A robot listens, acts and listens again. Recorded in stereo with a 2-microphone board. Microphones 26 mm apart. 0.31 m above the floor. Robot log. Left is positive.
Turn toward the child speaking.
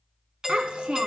note: The child speaking: about 45° right or 135° right.
cmd yaw -45
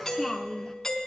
end: Found it: a child speaking, straight ahead, 2 to 4 m away.